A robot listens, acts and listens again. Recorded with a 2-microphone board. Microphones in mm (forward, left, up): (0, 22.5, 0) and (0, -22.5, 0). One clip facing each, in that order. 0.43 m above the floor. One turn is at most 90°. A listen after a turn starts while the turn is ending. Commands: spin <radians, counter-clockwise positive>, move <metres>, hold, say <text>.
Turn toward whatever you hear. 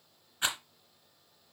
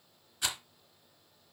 spin 0.52
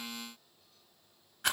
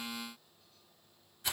spin 1.57
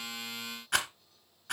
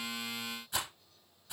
spin 1.13
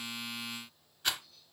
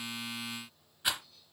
spin -0.17
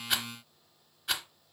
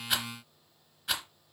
say Found it: a rattle, straight ahead, 2 to 4 m away.